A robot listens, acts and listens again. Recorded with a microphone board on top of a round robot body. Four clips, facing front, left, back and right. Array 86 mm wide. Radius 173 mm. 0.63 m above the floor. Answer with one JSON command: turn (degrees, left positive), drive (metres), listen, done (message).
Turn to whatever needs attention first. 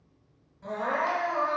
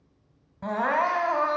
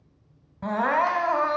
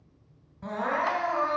{"turn": 140}
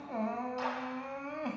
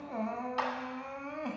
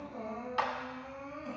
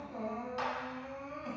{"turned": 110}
{"turn": 30}
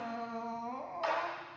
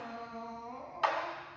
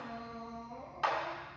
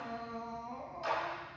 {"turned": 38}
{"done": "Facing the crying, 1 to 2 m away."}